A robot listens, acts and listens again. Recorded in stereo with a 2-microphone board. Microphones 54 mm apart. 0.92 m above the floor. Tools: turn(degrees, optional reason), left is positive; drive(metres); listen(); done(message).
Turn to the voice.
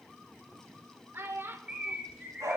turn(degrees=-45, reason="The child speaking: about 45° right or 135° right.")
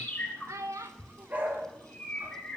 turn(degrees=-90, reason="So it is at 90° right.")
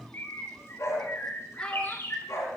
listen()
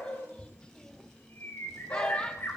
listen()
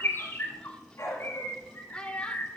turn(degrees=20, reason="The child speaking is now 20° left.")
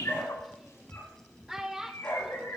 turn(degrees=-10, reason="The child speaking is now 10° right.")
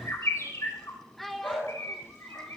done("Facing the child speaking.")